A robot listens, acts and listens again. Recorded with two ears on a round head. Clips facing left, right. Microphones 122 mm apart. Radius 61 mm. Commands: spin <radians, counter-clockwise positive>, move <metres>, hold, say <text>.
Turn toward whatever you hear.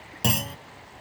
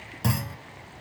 spin 0.52
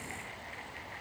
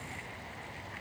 hold
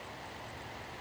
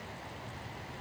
say I heard a clunk, but can't make it out now. It was about straight ahead or 120° left.